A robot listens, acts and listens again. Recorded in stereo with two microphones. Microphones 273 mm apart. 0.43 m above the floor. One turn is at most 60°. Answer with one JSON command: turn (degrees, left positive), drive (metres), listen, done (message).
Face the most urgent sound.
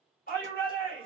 {"turn": 35}
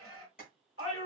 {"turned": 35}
{"turn": 60}
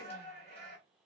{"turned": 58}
{"turn": 45}
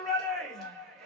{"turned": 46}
{"done": "Found it: a shout, straight ahead."}